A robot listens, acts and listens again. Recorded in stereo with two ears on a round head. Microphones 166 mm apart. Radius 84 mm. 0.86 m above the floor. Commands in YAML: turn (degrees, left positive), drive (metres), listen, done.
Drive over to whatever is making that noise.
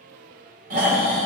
turn: -45
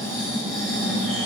drive: 1.0
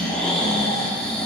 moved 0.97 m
drive: 1.0
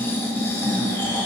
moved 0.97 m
turn: 15
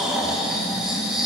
drive: 1.0
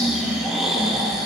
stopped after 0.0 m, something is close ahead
done: "I am next to the snoring."